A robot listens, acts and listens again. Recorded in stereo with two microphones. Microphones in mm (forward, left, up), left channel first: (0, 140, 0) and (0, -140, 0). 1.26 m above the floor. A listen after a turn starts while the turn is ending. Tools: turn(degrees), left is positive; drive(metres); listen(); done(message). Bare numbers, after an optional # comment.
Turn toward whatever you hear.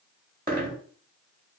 # The dropped coin: about 30° right or 150° right.
turn(-30)
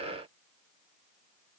listen()
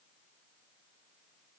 done("I heard a dropped coin, but can't make it out now. It was about straight ahead or 120° right.")